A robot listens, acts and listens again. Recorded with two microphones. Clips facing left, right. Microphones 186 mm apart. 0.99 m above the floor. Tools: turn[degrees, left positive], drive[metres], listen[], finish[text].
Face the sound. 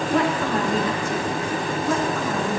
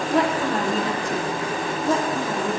Thought: The woman speaking: about 30° right or 150° right.
Action: turn[-30]
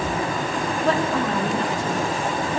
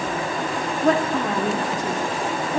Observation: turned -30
Thought: The woman speaking: about 30° right or 150° right.
Action: turn[-30]
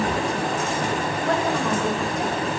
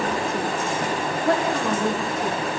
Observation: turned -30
Thought: So it is at 135° right.
Action: turn[-135]
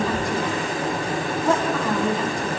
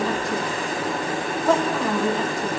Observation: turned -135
Action: finish[Facing the woman speaking.]